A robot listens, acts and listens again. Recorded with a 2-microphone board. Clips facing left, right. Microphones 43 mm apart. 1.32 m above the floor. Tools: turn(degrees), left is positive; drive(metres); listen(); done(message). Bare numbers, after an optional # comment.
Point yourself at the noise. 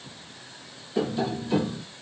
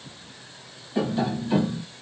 # The tapping: about 25° right or 155° right.
turn(-25)
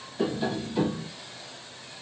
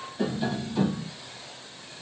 done("Facing the tapping.")